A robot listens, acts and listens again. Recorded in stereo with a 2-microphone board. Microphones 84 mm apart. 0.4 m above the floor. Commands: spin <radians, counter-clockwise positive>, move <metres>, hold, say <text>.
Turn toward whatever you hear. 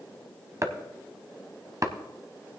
spin -0.70
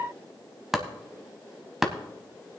say Found it: chopping, straight ahead, under 1 m away.